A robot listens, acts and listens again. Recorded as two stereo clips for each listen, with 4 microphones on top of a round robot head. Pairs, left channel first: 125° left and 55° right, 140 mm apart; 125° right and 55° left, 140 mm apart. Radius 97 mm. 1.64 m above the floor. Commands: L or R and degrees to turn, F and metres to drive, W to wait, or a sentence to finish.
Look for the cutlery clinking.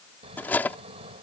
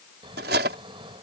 L45
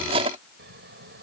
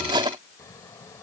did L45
Facing the cutlery clinking.